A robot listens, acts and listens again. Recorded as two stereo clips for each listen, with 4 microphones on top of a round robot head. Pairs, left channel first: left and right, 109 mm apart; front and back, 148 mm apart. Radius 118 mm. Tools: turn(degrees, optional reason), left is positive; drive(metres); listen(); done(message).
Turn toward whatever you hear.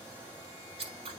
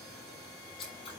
turn(degrees=-60, reason="The scissors: 60° right.")
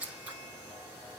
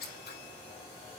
turn(degrees=-15, reason="The scissors is now 15° right.")
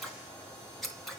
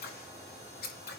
done("Found it: scissors, straight ahead, over 4 m away.")